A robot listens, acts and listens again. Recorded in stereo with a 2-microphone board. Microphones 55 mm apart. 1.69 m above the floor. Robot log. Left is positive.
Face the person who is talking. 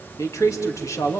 note: The man speaking: about 70° left or 110° left.
cmd yaw +70
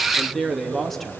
end: Found it: a man speaking, straight ahead, 2 to 4 m away.